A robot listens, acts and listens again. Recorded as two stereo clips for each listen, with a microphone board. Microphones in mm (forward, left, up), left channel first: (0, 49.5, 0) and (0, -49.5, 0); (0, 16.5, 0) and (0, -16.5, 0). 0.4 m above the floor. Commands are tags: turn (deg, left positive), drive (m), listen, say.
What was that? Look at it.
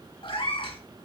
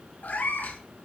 <turn deg="65"/>
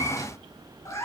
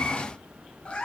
<turn deg="30"/>
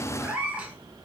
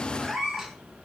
<turn deg="-15"/>
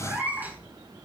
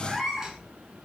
<turn deg="-20"/>
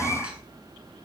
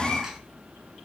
<turn deg="-15"/>
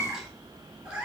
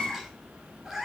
<turn deg="-10"/>
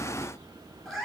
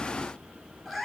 <say>Found it: a cat meowing, straight ahead.</say>